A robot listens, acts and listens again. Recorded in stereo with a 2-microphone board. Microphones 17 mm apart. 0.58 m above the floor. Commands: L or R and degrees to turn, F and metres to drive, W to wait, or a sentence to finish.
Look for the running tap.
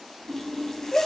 L30
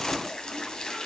L120
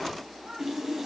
R30
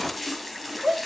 Found it: a running tap, straight ahead.